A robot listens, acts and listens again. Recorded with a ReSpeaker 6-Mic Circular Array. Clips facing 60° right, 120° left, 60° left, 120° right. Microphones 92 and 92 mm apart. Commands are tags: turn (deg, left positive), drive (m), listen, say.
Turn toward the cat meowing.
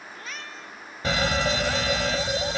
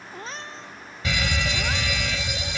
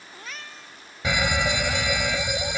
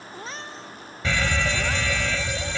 <turn deg="180"/>
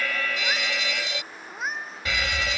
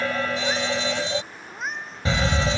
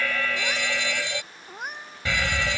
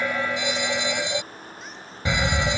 <turn deg="25"/>
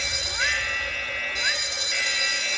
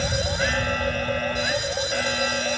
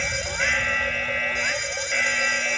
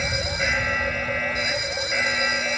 <listen/>
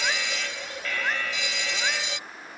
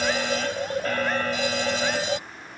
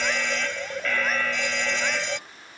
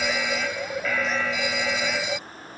<listen/>
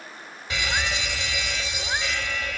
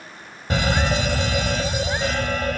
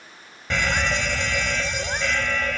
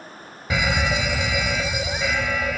<say>Facing where the cat meowing came from. I can't hear it now.</say>